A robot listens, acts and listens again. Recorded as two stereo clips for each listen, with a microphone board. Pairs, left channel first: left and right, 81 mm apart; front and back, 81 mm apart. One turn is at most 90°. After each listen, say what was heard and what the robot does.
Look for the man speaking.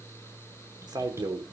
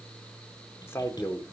The man speaking: 55° right. Turn 55° right.
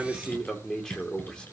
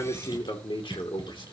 The man speaking is now 10° left. Turn 10° left.
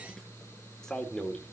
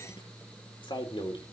The man speaking is now 10° left. Turn 10° left.
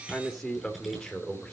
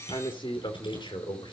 The man speaking is now 10° left. Turn 10° left.
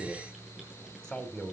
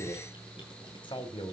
Found it: a man speaking, straight ahead, 2 to 4 m away.